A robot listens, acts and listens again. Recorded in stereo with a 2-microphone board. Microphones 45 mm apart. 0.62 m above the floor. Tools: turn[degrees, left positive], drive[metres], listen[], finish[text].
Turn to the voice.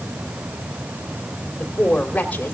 Thought: The woman speaking: about 30° left or 150° left.
Action: turn[30]
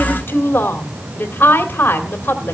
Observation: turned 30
Thought: So it is at 120° left.
Action: turn[120]
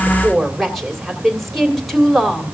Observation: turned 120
Action: finish[Found it: a woman speaking, straight ahead.]